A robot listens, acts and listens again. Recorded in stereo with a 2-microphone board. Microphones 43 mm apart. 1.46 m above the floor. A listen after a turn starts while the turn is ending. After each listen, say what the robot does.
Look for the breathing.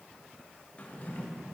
Keep listening.
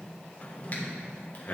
Turn 40° left.
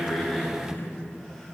Found it: breathing, straight ahead.